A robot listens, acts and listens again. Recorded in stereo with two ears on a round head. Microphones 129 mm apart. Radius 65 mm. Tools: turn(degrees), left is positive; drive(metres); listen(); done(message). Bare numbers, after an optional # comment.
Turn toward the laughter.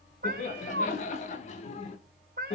# The laughter: about 45° left or 135° left.
turn(45)
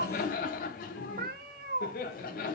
# So it is at 115° left.
turn(115)
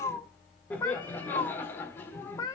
# The laughter is now 15° left.
turn(15)
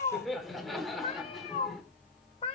done("Found it: laughter, straight ahead.")